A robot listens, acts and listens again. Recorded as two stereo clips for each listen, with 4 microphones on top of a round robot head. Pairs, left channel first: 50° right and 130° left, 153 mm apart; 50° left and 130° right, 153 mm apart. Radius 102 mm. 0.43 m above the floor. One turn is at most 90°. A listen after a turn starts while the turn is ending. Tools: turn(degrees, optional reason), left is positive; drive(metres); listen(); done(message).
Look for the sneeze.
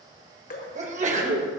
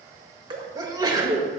turn(degrees=90, reason="The sneeze: 165° left.")
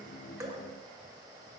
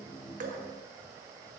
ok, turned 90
turn(degrees=75, reason="Nothing new. It was at 75° left.")
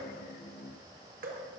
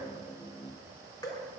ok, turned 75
done("Facing where the sneeze came from. I can't hear it now.")